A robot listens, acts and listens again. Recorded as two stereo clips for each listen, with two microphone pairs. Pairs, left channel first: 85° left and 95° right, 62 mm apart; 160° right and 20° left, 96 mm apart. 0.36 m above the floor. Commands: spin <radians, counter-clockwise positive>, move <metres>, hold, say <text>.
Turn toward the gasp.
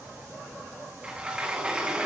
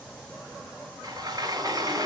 hold
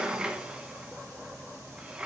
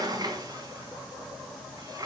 hold
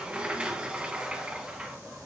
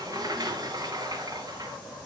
say I can't make out a gasp to turn to.